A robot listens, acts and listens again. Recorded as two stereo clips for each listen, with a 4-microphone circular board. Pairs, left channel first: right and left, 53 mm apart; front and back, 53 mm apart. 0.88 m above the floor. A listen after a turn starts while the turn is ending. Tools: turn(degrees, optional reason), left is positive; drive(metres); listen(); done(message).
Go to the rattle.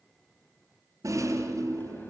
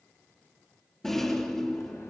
turn(degrees=80, reason="The rattle: 80° left.")
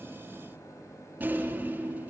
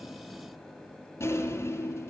turn(degrees=35, reason="The rattle is now 35° left.")
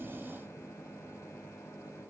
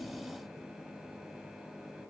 listen()
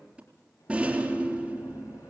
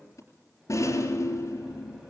turn(degrees=20, reason="The rattle is now 20° left.")
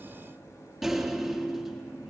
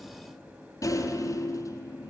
drive(metres=1.0)
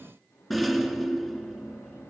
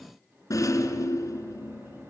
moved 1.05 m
drive(metres=1.0)
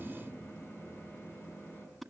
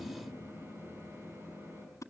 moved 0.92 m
drive(metres=1.0)
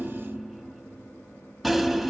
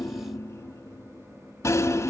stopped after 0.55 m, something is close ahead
done("I am next to the rattle.")